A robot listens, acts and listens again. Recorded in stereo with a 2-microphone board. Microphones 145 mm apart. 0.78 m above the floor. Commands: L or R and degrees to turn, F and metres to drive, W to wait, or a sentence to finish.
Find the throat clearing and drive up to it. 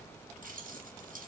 W
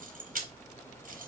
W
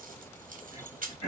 L40
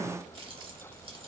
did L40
W
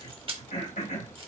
L95
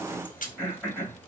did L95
R10
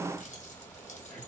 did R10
W
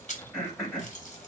F1.0
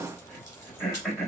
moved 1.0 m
F1.0
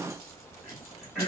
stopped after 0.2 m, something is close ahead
Arrived at the throat clearing, straight ahead.